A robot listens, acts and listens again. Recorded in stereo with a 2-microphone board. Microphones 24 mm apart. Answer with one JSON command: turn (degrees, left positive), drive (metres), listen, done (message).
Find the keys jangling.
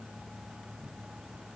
{"listen": true}
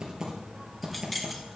{"turn": 30}
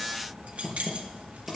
{"turn": -65}
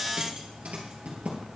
{"listen": true}
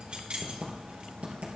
{"turn": -50}
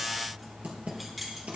{"done": "Facing the keys jangling."}